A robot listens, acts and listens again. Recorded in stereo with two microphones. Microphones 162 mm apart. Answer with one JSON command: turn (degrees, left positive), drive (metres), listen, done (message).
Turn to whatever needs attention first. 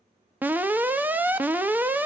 {"turn": -30}
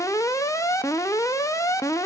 {"turn": 20}
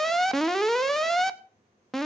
{"done": "Facing the alarm."}